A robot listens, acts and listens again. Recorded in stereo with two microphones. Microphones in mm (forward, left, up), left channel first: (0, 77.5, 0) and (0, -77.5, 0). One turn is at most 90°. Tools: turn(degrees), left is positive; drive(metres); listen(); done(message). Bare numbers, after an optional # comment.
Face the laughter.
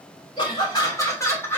turn(30)
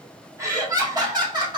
# So it is at 30° right.
turn(-30)
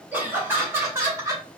# The laughter is now 20° right.
turn(-20)
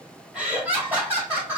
# The laughter is now 15° right.
turn(-15)
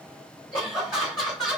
done("Facing the laughter.")